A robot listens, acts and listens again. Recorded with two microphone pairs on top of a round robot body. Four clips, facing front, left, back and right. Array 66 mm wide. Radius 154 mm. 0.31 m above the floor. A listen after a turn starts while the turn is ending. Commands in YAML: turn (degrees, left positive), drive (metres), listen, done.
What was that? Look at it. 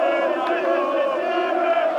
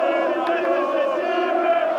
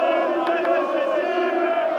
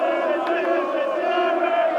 listen: true
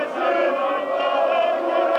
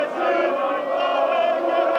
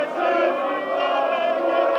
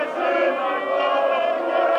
listen: true
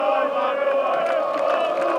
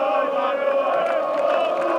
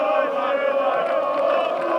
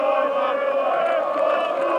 done: "I can't make out anything to turn to."